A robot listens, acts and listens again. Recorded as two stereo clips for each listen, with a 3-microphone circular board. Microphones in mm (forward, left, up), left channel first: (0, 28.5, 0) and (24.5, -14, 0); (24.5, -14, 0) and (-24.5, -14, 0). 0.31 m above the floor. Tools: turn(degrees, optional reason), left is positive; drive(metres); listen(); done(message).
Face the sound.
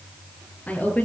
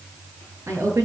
turn(degrees=180, reason="The woman speaking: straight behind.")
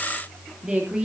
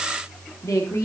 turn(degrees=15, reason="The woman speaking is now 15° left.")
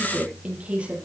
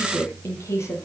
done("Found it: a woman speaking, straight ahead.")